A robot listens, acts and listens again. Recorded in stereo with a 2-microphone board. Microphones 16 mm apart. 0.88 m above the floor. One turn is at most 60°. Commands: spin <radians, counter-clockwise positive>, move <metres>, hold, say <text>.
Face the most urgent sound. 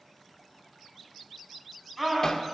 spin 0.52
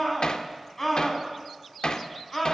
spin 1.05
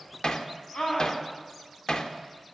spin 1.05
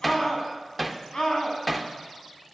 spin 0.87
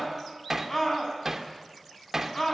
spin 0.44
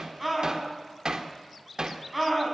say Facing the scream, over 4 m away.